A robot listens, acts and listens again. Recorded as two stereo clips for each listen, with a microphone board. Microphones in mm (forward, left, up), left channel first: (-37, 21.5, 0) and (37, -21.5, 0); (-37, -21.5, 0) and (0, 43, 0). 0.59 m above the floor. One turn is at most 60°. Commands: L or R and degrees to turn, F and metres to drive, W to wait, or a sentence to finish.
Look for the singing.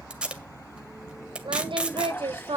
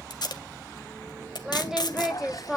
R30
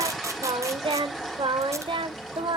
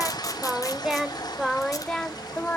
R50
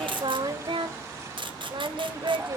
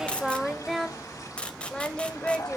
R40
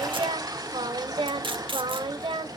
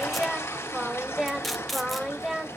R25
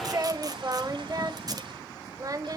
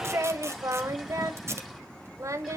L15
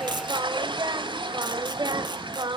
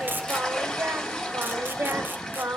Found it: singing, straight ahead.